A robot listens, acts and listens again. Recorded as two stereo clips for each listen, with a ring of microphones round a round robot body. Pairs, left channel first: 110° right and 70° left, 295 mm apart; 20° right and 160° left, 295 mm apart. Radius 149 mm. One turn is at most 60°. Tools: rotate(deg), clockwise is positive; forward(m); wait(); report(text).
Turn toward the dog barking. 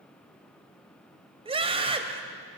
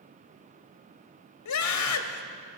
wait()
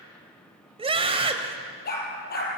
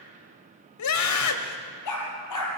rotate(50)
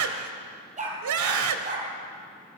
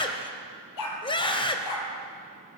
report("Found it: a dog barking, straight ahead, 2 to 4 m away.")